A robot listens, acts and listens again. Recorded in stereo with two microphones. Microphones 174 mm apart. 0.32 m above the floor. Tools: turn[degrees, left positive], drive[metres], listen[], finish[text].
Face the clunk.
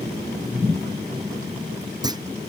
Thought: The clunk: about 20° right or 160° right.
Action: turn[-20]
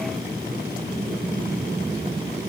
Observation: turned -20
Action: listen[]
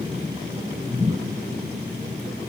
Action: finish[I heard a clunk, but can't make it out now. It was about straight ahead or 140° right.]